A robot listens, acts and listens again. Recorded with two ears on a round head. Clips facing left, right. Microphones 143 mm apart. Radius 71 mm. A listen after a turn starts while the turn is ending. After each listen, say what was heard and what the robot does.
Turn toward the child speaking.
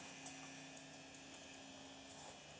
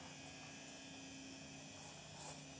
Keep listening.
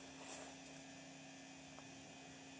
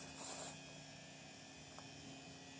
Keep listening.
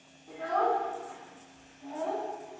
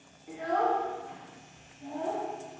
Turn 30° right.
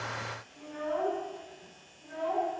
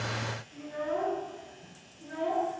So it is at 135° right. Turn 135° right.
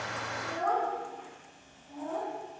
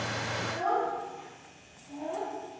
The child speaking is now 10° right. Turn 10° right.
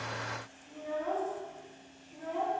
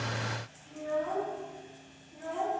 Facing the child speaking.